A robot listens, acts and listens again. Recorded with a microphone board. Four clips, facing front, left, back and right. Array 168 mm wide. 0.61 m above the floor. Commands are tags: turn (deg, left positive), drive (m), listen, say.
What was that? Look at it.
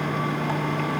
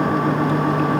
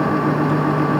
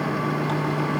<listen/>
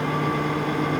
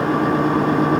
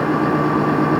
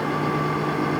<listen/>
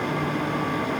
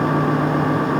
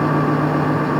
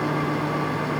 <say>I can't make out anything.</say>